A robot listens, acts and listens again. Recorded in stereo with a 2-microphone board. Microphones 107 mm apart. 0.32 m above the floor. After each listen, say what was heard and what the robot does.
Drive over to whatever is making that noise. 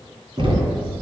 The knocking: about 55° right or 125° right. Turn 55° right.
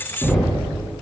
Drive 1.0 m forward.
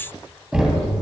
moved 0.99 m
The knocking is now 10° right. Turn 10° right.
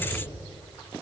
Keep listening.
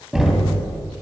Drive 1.0 m forward.
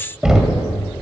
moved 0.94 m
The knocking is now 10° right. Turn 10° right.
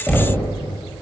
Drive 1.0 m forward.
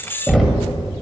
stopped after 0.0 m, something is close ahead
I am next to the knocking.